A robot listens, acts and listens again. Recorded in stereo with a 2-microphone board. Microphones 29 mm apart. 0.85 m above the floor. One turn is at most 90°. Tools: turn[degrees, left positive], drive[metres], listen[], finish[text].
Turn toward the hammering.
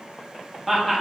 Action: listen[]
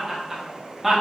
Action: listen[]
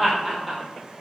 Action: finish[I can't make out hammering to turn to.]